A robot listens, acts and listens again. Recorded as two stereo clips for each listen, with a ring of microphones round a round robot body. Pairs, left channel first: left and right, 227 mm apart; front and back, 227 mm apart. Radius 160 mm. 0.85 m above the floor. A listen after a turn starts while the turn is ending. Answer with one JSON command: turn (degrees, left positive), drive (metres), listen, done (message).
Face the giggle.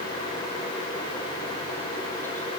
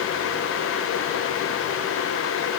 {"listen": true}
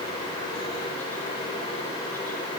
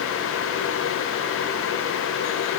{"listen": true}
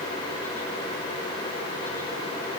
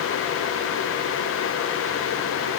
{"done": "I can't make out a giggle."}